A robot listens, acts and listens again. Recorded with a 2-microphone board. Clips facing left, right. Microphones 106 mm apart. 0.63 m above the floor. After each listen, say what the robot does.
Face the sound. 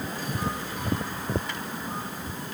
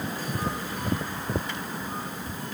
Keep listening.
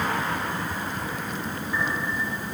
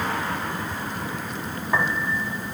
Turn 70° right.
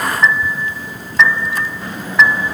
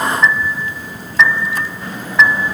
Facing the piano.